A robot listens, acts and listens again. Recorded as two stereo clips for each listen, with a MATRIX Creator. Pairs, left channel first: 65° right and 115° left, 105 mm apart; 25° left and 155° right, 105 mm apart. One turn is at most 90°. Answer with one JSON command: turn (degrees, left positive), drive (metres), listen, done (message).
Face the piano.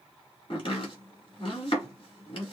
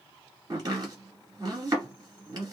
{"listen": true}
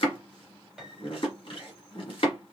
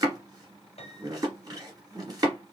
{"turn": 30}
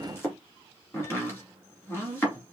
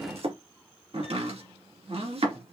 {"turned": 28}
{"listen": true}
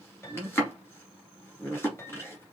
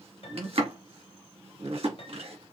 {"done": "Facing the piano, 1 to 2 m away."}